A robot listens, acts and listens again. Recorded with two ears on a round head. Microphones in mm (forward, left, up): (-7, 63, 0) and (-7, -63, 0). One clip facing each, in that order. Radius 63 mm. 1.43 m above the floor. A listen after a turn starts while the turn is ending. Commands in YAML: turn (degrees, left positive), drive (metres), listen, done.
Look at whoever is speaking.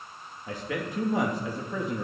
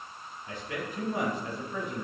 turn: 65
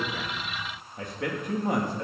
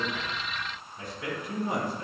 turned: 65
turn: 45
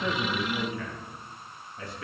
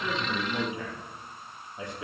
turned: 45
turn: -20
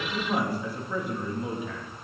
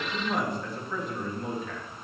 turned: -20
done: "Facing the man speaking, 2 to 4 m away."